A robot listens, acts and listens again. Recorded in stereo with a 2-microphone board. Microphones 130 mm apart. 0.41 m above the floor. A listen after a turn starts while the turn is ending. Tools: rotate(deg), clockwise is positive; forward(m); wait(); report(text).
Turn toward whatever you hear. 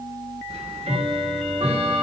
rotate(55)
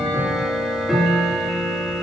report("Found it: ticking, straight ahead, 1 to 2 m away.")